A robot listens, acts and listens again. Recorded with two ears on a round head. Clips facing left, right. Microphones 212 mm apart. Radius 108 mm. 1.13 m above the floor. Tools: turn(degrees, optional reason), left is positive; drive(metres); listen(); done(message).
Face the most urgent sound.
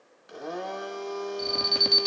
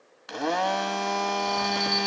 turn(degrees=40, reason="The alarm: about 40° left or 140° left.")
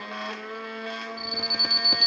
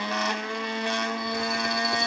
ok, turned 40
turn(degrees=100, reason="So it is at 100° left.")
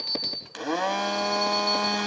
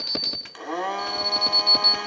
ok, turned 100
turn(degrees=-10, reason="The alarm is now 10° right.")
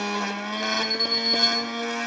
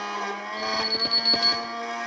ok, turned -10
done("Found it: an alarm, straight ahead, 2 to 4 m away.")